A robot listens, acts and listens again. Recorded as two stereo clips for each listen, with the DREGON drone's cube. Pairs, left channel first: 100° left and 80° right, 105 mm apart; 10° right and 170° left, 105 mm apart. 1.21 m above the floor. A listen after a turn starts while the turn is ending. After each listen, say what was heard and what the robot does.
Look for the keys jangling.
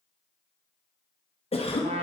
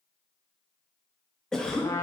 Keep listening.
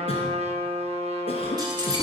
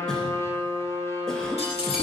The keys jangling: 35° right. Turn 35° right.
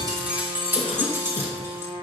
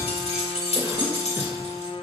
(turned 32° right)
The keys jangling is now 15° right. Turn 15° right.
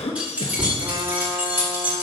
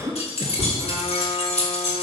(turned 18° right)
The keys jangling is now 10° right. Turn 10° right.
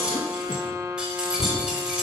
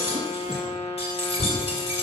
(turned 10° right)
Facing the keys jangling, 2 to 4 m away.